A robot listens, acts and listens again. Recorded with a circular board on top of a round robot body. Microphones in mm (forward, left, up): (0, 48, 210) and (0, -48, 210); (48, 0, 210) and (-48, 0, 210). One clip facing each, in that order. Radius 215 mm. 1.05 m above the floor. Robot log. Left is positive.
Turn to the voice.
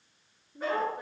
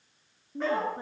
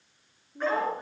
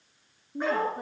note: The woman speaking: 150° right.
cmd yaw -150
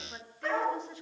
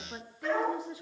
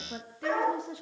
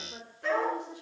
note: The woman speaking is now 10° right.
cmd yaw -10
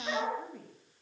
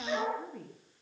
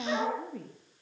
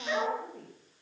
end: Found it: a woman speaking, straight ahead.